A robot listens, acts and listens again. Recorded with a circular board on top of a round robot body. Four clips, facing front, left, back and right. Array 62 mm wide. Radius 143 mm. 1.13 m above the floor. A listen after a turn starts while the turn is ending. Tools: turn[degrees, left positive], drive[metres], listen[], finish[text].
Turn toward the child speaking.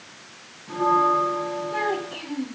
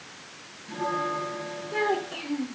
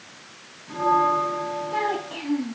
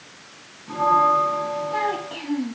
Thought: The child speaking: 115° right.
Action: turn[-115]
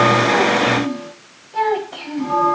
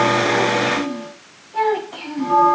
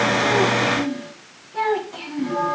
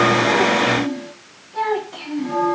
Thought: The child speaking is now 20° left.
Action: turn[20]
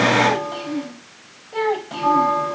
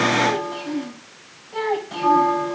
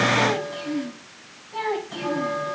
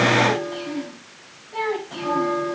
Thought: The child speaking is now 10° left.
Action: turn[10]
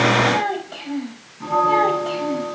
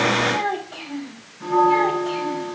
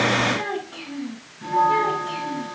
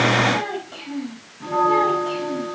Action: finish[Found it: a child speaking, straight ahead, 2 to 4 m away.]